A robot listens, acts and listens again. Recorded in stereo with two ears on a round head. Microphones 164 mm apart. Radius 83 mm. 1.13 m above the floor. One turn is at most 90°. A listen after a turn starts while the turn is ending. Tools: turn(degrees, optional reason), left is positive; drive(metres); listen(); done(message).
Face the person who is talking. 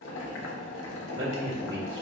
turn(degrees=-90)
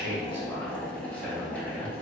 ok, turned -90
listen()
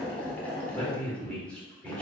done("Facing the man speaking, 1 to 2 m away.")